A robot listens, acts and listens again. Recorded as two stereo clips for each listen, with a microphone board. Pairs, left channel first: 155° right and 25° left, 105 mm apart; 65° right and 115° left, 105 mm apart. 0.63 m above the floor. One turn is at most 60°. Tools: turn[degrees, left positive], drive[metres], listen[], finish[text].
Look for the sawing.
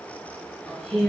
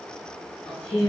Action: listen[]
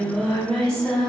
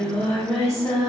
Action: listen[]
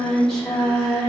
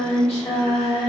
Action: finish[I can't make out sawing, only singing.]